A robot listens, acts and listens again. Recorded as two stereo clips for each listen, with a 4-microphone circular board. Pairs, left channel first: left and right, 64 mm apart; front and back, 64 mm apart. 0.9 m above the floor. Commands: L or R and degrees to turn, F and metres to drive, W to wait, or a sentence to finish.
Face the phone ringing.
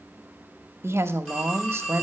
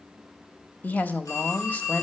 L15
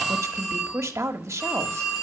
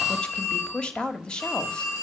Found it: a phone ringing, straight ahead.